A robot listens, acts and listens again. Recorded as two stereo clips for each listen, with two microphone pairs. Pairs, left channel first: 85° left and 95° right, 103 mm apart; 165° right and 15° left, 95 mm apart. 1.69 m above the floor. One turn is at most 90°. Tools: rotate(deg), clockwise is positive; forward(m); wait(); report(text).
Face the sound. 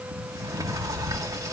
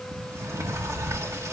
rotate(45)
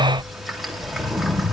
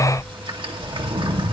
report("Found it: a sliding door, straight ahead, 2 to 4 m away.")